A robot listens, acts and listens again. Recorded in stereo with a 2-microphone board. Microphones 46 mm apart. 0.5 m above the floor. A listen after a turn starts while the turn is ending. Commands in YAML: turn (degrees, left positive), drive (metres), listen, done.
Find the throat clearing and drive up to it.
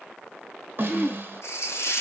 turn: 30
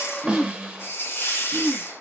turn: 150
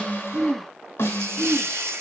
turn: 15
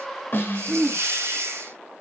drive: 1.0
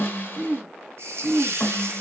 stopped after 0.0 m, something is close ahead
done: "Something is in my way. I am facing the throat clearing but have not reached it."